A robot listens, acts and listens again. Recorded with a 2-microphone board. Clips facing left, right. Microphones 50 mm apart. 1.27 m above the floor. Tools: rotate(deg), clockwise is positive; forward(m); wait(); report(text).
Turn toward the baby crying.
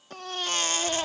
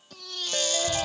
rotate(-40)
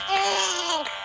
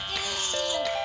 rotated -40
rotate(-95)
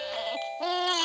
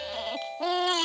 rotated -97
report("Found it: a baby crying, straight ahead.")